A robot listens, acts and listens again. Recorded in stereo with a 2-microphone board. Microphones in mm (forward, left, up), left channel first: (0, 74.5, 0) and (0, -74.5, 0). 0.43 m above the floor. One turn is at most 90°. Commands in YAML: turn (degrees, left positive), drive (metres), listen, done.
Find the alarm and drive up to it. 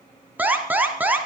turn: -30
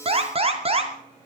turn: -90
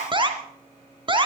turn: -35
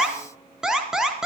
drive: 1.0
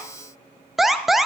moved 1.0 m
drive: 1.0
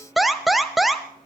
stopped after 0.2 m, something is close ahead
done: "Arrived at the alarm, straight ahead."